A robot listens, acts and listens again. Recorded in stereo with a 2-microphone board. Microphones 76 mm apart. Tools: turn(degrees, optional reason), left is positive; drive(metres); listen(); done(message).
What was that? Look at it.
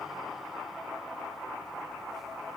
listen()
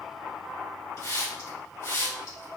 turn(degrees=60, reason="The hiss: about 60° left or 120° left.")
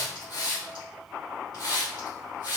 turn(degrees=65, reason="So it is at 65° left.")
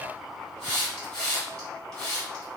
turn(degrees=10, reason="The hiss is now 10° left.")
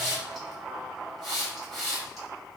done("Facing the hiss.")